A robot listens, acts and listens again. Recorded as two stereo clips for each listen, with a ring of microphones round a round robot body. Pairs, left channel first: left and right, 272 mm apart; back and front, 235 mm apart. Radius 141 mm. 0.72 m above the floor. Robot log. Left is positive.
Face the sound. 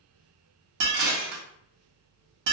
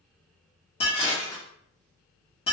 note: The dishes clattering: 110° right.
cmd yaw -110
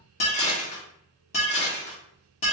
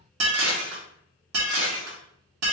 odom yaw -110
note: The dishes clattering is now 25° left.
cmd yaw +25
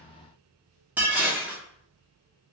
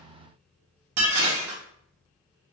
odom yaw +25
end: Facing the dishes clattering, under 1 m away.